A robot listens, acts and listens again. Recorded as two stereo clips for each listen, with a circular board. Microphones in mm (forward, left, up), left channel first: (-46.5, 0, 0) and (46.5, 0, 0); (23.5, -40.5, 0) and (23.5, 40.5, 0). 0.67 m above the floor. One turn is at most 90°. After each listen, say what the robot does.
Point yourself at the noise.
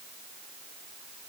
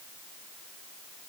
Keep listening.
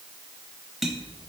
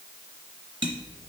Turn 85° left.
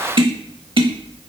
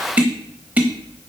Turn 20° left.
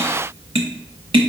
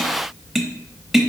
Found it: tapping, straight ahead, under 1 m away.